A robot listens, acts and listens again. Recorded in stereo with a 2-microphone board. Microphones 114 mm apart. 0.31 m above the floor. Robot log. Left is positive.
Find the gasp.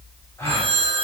note: The gasp: about 25° left or 155° left.
cmd yaw +25
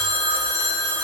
cmd idle
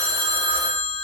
end: I heard a gasp, but can't make it out now. It was about straight ahead or 130° left.